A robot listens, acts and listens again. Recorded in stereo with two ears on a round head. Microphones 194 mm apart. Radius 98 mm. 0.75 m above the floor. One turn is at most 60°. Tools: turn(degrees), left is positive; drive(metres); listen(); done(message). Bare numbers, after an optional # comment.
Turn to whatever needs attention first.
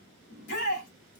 # The shout: about 55° left or 125° left.
turn(55)
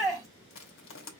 done("Facing the shout.")